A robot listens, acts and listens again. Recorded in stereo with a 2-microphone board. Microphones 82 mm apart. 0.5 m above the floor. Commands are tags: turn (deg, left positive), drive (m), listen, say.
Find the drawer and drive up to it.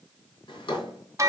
<turn deg="90"/>
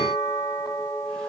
<listen/>
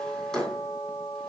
<drive m="1.0"/>
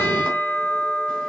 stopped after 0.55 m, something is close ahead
<listen/>
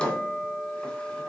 <turn deg="10"/>
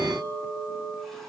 <listen/>
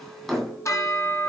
<say>Something is in my way. I am facing the drawer but have not reached it.</say>